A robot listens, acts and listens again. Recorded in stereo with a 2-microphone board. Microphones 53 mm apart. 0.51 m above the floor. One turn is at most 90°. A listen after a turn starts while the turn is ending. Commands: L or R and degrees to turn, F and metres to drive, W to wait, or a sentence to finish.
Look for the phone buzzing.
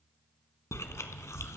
W
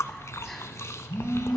R25
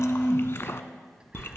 Facing the phone buzzing, 2 to 4 m away.